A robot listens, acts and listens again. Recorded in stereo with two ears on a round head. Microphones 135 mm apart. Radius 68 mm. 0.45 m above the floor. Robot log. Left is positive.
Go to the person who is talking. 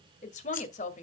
note: The woman speaking: about 50° left or 130° left.
cmd yaw +50
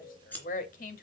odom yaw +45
note: So it is at 70° left.
cmd yaw +70
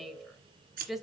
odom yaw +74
cmd fwd 1.0
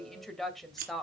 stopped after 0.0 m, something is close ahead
end: Something is in my way. I am facing the woman speaking but have not reached it.